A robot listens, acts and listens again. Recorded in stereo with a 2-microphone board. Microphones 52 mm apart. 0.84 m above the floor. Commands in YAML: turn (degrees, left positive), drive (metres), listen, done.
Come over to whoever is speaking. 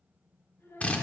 turn: 60
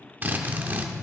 listen: true
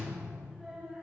drive: 1.0
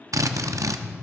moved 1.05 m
listen: true
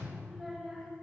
turn: 10
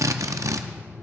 listen: true
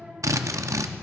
listen: true
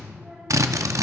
done: "I heard a child speaking from this way, but can't make it out now. I did not reach it."